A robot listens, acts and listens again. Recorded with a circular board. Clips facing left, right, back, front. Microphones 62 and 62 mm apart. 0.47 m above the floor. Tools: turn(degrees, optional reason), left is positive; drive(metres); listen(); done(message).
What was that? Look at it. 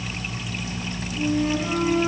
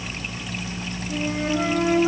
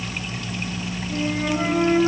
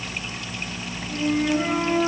turn(degrees=-100, reason="The flute: 100° right.")
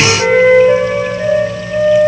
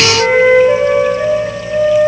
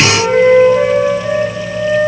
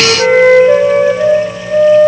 done("Facing the flute.")